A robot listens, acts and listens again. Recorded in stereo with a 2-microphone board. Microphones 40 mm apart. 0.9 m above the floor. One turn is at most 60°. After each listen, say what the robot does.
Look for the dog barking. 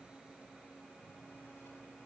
Keep listening.
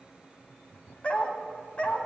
Turn 30° left.
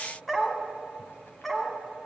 Found it: a dog barking, straight ahead, 2 to 4 m away.